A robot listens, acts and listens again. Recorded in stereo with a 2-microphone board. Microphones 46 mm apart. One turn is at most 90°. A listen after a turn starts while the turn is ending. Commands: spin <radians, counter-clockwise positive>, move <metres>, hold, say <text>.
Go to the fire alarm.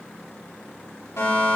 spin 1.22
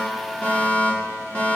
spin 0.44
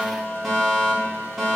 move 1.0
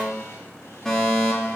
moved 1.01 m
spin 0.17
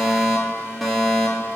move 1.0
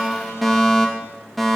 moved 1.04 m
move 1.0
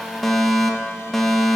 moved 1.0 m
move 1.0
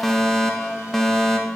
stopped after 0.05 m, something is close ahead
spin 0.17
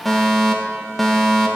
say I am next to the fire alarm.